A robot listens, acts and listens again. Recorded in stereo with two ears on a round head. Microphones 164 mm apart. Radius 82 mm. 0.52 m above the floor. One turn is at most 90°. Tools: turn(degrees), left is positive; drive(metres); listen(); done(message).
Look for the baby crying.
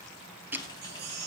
turn(degrees=-60)
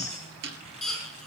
done("Facing the baby crying.")